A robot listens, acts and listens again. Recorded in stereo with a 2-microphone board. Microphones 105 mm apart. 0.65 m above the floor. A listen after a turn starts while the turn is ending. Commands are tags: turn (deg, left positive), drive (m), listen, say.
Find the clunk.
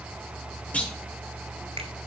<turn deg="30"/>
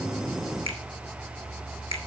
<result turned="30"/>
<listen/>
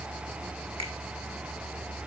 <say>I heard a clunk, but can't make it out now. It was about 20° right or 140° left.</say>